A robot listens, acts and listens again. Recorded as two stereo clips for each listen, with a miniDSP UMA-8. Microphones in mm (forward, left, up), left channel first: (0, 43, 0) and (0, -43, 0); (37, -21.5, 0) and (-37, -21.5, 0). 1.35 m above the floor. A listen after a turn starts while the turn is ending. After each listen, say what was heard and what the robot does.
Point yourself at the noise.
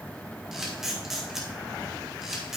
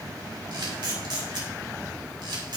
The camera shutter: 175° right. Turn 175° right.
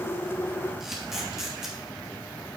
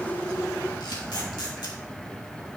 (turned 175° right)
Keep listening.
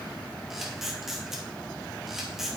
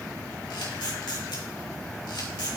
Found it: a camera shutter, straight ahead.